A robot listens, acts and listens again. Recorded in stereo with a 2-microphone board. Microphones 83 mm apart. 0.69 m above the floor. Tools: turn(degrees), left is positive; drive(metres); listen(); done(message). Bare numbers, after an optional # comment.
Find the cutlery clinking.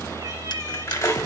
# The cutlery clinking: about 35° left or 145° left.
turn(35)
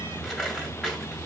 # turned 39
listen()
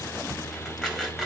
listen()
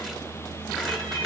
done("I heard cutlery clinking, but can't make it out now. It was about 5° right or 110° left.")